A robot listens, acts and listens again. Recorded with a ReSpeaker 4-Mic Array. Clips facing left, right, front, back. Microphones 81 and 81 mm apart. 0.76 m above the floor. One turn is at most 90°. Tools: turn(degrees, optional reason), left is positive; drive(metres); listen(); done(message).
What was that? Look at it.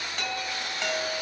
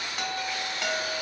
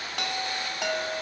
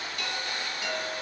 turn(degrees=-10, reason="The chime: 10° right.")
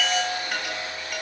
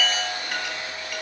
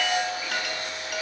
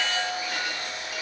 done("Found it: a chime, straight ahead.")